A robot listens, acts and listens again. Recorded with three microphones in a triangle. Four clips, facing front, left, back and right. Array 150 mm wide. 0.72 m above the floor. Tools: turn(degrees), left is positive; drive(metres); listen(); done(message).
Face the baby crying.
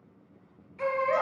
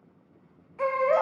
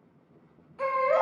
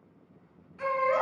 turn(degrees=110)
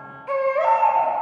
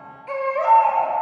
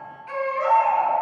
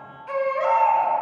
turn(degrees=20)
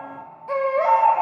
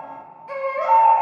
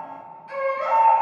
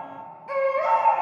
done("Found it: a baby crying, straight ahead, 2 to 4 m away.")